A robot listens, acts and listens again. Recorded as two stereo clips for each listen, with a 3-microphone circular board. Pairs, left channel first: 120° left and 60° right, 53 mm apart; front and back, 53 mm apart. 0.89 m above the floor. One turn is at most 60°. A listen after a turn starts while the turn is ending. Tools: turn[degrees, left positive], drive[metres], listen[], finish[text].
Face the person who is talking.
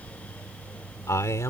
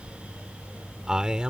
Thought: The man speaking: 110° left.
Action: turn[60]
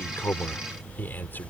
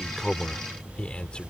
Thought: The man speaking is now 70° left.
Action: turn[60]
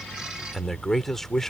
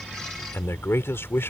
Thought: The man speaking is now 40° left.
Action: turn[40]
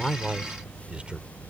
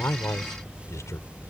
Thought: The man speaking is now 10° left.
Action: turn[10]
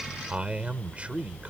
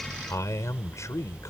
Action: finish[Facing the man speaking.]